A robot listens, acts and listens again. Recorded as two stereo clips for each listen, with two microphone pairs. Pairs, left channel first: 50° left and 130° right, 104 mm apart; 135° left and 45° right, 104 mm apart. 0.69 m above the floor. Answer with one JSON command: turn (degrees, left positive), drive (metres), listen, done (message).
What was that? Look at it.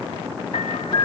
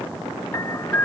{"turn": 70}
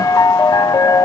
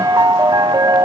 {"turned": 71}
{"done": "Facing the piano."}